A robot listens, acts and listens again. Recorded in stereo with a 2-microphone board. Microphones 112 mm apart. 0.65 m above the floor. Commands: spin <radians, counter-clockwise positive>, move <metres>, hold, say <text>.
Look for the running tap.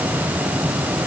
hold
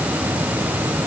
hold
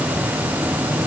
say I can't make out a running tap to turn to.